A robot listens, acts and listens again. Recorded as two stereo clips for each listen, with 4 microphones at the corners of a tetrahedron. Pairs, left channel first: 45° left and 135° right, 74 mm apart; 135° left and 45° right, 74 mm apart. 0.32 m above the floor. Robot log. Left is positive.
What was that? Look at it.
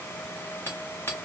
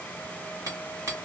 note: The hammering: 10° right.
cmd yaw -10
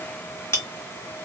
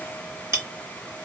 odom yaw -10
end: Facing the hammering, 1 to 2 m away.